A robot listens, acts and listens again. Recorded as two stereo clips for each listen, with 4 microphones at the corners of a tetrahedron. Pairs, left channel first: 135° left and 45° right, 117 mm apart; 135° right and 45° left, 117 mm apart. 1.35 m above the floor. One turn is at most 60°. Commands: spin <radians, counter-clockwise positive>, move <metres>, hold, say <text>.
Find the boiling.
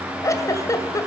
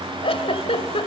hold
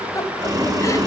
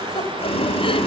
spin -1.05
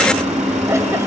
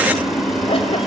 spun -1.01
spin -0.79
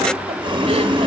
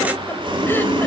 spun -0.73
say Found it: boiling, straight ahead, 2 to 4 m away.